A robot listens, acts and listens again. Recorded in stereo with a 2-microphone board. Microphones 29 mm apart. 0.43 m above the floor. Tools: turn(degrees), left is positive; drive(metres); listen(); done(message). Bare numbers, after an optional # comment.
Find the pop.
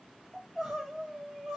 listen()
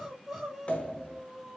# The pop: about 45° left or 135° left.
turn(45)
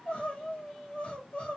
listen()
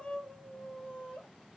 done("I heard a pop, but can't make it out now. It was about straight ahead or 90° left.")